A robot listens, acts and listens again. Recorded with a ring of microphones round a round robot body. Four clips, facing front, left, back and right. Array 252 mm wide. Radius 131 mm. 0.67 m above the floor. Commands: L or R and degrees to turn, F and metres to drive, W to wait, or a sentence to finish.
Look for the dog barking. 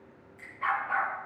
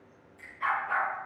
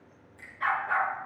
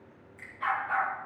R175
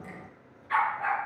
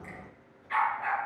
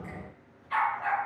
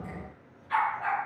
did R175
R15
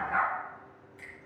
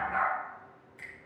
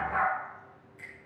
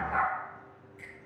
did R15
R10
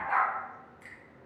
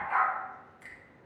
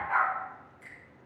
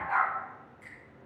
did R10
R10
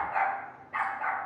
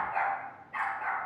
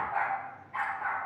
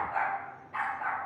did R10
Found it: a dog barking, straight ahead.